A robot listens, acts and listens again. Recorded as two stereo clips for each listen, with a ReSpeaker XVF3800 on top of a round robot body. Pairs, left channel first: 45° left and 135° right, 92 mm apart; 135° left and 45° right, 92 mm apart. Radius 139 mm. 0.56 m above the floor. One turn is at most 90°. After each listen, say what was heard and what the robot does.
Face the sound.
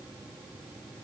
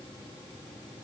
Keep listening.
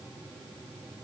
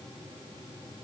Keep listening.
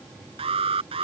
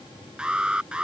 The alarm: 125° right. Turn 90° right.
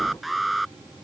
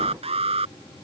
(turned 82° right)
The alarm is now 45° right. Turn 45° right.
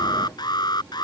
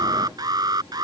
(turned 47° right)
Found it: an alarm, straight ahead.